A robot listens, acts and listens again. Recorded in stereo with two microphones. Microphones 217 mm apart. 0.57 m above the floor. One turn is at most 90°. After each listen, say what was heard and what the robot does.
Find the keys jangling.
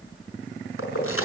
Turn 90° left.
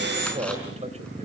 Keep listening.
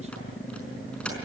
Keep listening.
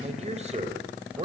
Facing where the keys jangling came from. I can't hear it now.